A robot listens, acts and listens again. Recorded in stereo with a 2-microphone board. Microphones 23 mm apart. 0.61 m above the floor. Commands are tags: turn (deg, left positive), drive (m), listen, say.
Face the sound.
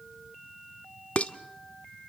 <turn deg="60"/>
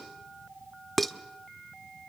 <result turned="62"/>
<say>Facing the dishes clattering, under 1 m away.</say>